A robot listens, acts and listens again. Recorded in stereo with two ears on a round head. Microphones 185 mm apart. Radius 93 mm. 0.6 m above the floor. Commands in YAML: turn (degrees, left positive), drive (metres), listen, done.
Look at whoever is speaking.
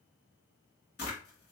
listen: true
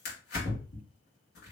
listen: true
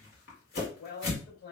turn: 50
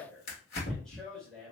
done: "Facing the man speaking, 2 to 4 m away."